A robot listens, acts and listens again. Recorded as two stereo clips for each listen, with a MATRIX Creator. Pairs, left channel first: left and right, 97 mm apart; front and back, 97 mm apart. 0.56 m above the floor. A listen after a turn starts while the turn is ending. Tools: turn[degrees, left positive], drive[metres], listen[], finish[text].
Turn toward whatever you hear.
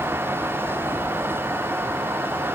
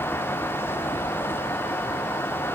Action: listen[]
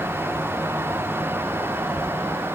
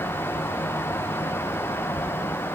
Action: listen[]
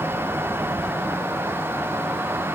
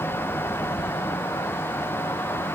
Action: finish[I can't make out anything to turn to.]